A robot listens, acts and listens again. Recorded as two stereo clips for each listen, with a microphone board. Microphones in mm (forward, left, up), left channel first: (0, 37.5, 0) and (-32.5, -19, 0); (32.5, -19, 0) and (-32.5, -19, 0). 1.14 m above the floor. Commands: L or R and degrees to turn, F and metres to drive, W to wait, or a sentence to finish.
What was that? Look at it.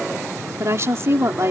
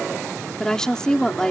R80
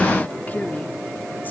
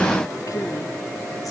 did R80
W
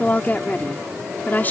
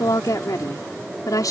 Found it: a woman speaking, straight ahead.